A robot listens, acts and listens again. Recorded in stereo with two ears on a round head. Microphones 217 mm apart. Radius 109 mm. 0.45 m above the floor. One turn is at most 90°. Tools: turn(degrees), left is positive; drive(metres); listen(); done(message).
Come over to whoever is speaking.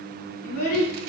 turn(degrees=35)
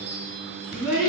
drive(metres=1.0)
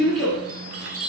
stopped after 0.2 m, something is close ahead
done("Something is in my way. I am facing the child speaking but have not reached it.")